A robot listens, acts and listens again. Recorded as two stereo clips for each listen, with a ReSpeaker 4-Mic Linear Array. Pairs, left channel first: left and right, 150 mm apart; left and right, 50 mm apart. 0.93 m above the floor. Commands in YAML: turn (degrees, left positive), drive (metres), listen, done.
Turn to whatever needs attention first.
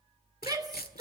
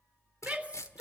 turn: -25
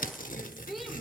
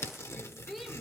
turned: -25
done: "Found it: a shout, straight ahead."